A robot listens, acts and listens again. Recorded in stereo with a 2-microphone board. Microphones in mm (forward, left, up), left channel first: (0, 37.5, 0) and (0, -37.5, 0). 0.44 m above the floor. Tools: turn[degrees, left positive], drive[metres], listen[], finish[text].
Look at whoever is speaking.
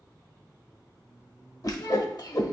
Thought: The child speaking: about 65° left or 115° left.
Action: turn[65]
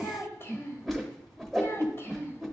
Thought: So it is at 35° left.
Action: turn[35]
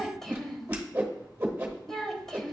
Action: finish[Found it: a child speaking, straight ahead, 1 to 2 m away.]